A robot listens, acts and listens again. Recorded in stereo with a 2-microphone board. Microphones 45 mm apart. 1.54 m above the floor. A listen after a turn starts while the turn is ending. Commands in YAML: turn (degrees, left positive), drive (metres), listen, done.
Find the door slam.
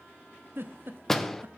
turn: 30
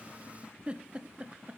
listen: true
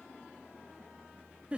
done: "I heard a door slam, but can't make it out now. It was about 25° right or 145° left."